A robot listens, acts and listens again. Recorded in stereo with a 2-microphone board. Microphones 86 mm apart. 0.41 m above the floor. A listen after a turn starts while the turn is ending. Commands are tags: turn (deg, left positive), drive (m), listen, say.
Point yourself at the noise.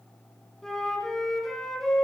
<turn deg="30"/>
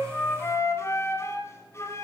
<turn deg="145"/>
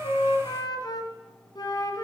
<turn deg="50"/>
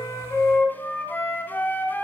<turn deg="20"/>
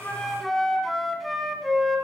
<say>Found it: a flute, straight ahead.</say>